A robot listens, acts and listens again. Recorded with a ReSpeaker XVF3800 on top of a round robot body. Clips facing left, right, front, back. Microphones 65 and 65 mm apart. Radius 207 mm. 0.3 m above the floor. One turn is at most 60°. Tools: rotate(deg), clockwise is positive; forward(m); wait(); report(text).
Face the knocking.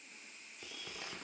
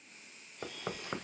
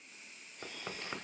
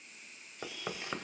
rotate(60)
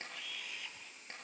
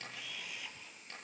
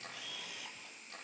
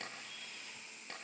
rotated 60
rotate(50)
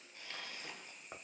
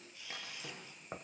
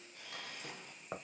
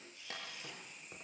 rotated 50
rotate(20)
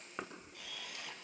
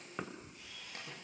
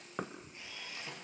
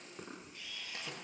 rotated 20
report("Facing the knocking, 2 to 4 m away.")